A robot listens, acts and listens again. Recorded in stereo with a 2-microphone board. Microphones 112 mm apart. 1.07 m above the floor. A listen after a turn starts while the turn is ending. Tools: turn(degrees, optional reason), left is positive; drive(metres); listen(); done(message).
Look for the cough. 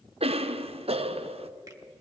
turn(degrees=-60, reason="The cough: about 60° right or 120° right.")
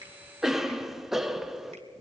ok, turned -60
done("Facing the cough, under 1 m away.")